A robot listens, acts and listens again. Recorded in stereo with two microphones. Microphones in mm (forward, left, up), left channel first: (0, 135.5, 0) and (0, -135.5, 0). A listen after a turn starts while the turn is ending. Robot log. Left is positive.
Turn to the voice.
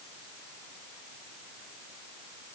cmd idle
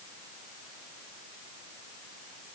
cmd idle
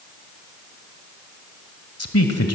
note: The man speaking: about 60° left or 120° left.
cmd yaw +60
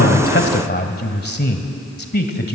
note: So it is at 45° left.
cmd yaw +45
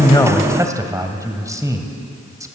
note: The man speaking is now 15° right.
cmd yaw -15
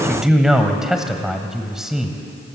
end: Facing the man speaking, 1 to 2 m away.